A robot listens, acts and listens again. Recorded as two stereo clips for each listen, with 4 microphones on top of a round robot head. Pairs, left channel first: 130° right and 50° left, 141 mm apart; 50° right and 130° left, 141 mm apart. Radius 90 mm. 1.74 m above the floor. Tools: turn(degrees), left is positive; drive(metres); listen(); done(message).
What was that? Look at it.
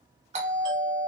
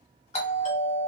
done("Found it: a doorbell, straight ahead.")